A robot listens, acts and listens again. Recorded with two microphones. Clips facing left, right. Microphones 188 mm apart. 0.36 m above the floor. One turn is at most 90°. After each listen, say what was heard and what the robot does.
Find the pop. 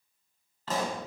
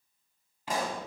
Turn 30° right.
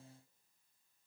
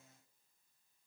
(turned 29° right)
Keep listening.
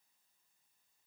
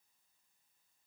I heard a pop, but can't make it out now. It was about 15° left or 135° right.